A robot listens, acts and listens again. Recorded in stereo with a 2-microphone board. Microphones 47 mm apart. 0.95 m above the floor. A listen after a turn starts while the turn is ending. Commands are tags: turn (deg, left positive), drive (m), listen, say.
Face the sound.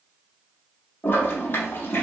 <turn deg="50"/>
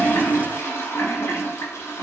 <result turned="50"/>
<turn deg="75"/>
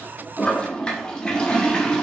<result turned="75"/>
<turn deg="20"/>
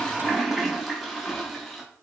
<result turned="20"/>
<say>Found it: a toilet flushing, straight ahead, under 1 m away.</say>